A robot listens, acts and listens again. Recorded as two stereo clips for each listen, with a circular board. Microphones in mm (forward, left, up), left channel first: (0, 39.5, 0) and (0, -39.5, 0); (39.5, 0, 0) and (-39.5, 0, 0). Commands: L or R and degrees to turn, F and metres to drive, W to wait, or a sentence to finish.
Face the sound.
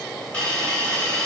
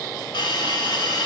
L15
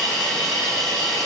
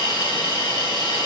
Facing the hiss.